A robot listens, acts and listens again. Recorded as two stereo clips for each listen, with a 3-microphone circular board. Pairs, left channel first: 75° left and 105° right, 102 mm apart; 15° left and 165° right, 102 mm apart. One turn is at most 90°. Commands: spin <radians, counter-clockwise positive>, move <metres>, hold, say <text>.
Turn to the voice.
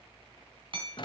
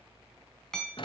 hold
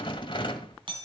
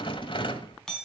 hold
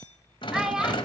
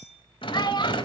spin -0.35
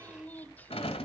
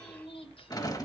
say Facing the child speaking, under 1 m away.